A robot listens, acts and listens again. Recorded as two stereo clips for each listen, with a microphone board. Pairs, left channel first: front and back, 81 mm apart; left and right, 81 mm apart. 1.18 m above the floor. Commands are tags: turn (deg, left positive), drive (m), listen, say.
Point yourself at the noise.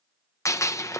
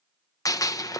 <turn deg="50"/>
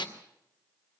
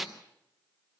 <say>Found it: a gunshot, straight ahead.</say>